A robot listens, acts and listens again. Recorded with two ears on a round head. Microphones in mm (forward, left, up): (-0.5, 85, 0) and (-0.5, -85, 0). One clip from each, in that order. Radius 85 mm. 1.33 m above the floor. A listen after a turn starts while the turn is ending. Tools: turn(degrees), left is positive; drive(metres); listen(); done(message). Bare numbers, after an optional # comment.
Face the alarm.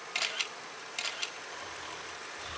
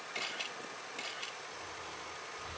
listen()
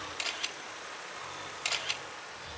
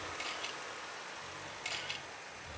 listen()
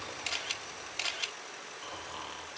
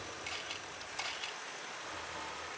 done("I can't make out an alarm, only snoring and a camera shutter.")